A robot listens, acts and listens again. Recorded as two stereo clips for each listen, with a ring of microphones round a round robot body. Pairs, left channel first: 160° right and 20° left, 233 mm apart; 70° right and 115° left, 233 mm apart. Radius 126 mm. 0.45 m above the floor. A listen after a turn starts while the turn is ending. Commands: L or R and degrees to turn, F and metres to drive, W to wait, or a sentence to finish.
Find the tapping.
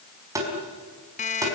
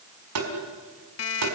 L100
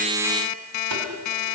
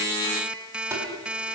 W
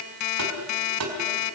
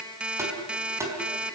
L35
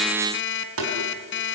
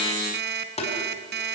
Facing the tapping.